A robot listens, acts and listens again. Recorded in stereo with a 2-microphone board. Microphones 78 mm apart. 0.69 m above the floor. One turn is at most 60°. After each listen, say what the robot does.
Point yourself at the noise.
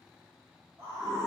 Turn 45° right.
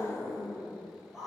Found it: a scream, straight ahead, 1 to 2 m away.